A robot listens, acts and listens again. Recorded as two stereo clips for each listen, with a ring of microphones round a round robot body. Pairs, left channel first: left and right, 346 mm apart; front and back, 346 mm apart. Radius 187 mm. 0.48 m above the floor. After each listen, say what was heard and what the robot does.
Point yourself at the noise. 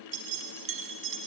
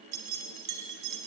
The keys jangling: 145° right. Turn 145° right.
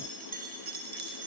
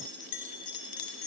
The keys jangling is now 30° right. Turn 30° right.
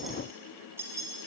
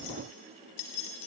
The keys jangling is now 10° right. Turn 10° right.
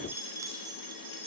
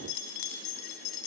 The keys jangling is now 15° right. Turn 15° right.
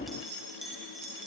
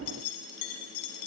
Found it: keys jangling, straight ahead, 2 to 4 m away.